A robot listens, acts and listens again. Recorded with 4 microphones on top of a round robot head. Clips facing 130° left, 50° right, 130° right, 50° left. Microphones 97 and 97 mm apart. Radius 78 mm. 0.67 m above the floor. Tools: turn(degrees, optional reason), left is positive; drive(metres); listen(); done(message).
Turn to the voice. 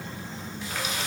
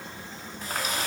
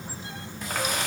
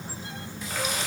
listen()
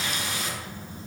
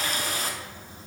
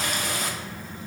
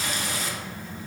listen()
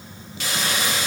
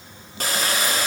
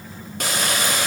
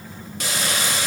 done("I can't make out anyone speaking to turn to.")